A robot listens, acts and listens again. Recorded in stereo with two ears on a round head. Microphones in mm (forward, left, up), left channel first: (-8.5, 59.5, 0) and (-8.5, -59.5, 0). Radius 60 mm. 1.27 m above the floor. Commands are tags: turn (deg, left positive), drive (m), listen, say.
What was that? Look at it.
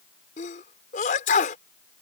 <turn deg="70"/>
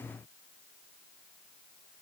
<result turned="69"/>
<listen/>
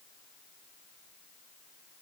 <say>I heard a sneeze, but can't make it out now. It was about straight ahead or 45° left.</say>